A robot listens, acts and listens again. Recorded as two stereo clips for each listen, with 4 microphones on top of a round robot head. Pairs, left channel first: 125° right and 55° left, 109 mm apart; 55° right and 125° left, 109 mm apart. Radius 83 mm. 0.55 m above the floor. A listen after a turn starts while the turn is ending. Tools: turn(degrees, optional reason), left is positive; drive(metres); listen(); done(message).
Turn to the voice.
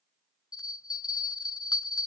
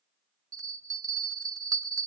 listen()
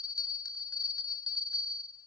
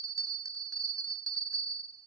listen()
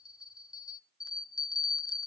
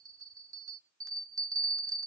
done("I can't make out anyone speaking to turn to.")